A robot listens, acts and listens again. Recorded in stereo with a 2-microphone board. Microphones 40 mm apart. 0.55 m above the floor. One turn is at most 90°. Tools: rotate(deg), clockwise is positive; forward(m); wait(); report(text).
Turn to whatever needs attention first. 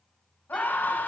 rotate(-50)
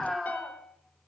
report("Found it: a scream, straight ahead, 2 to 4 m away.")